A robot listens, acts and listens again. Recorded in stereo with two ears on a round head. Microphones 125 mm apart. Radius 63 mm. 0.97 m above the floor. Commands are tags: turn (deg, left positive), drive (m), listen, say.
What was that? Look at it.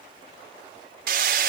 <turn deg="-70"/>
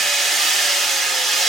<say>Facing the hammering.</say>